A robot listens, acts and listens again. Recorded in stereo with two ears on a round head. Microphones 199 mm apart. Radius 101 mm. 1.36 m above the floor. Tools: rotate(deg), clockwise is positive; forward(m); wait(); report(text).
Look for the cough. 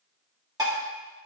wait()
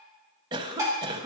rotate(20)
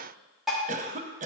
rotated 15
rotate(145)
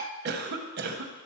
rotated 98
rotate(45)
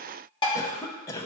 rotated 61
rotate(-15)
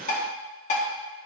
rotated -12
wait()
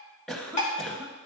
report("Found it: a cough, straight ahead, under 1 m away.")